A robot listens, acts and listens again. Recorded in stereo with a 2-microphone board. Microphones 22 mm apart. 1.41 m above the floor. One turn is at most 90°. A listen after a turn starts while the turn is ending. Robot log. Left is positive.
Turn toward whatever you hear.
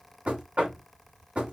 note: The knocking: about 75° right or 105° right.
cmd yaw -75
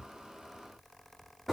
end: Facing the knocking.